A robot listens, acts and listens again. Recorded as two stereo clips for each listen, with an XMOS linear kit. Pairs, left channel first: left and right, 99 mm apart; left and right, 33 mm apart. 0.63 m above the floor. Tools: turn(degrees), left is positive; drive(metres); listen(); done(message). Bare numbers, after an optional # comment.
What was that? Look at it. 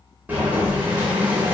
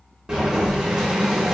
# The boiling: about 20° right or 160° right.
turn(-20)
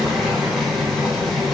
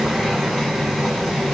done("Facing the boiling, under 1 m away.")